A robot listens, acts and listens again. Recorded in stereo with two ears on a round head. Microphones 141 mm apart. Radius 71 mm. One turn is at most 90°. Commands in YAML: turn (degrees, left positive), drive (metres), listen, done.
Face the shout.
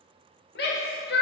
turn: 70
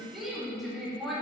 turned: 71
done: "Found it: a shout, straight ahead, 2 to 4 m away."